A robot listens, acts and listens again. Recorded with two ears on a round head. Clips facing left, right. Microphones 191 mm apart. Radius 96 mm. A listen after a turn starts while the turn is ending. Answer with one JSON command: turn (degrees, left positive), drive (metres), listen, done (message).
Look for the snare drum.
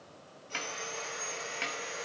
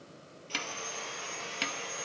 {"turn": -50}
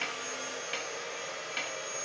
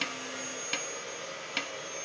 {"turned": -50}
{"turn": -70}
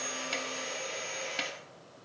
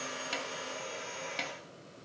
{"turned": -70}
{"done": "Found it: a snare drum, straight ahead."}